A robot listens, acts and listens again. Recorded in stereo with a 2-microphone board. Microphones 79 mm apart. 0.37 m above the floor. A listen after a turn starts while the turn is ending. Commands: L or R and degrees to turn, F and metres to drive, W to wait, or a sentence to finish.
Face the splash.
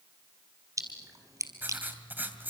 R45
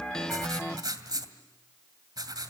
W
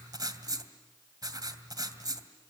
I heard a splash, but can't make it out now. It was about straight ahead or 90° right.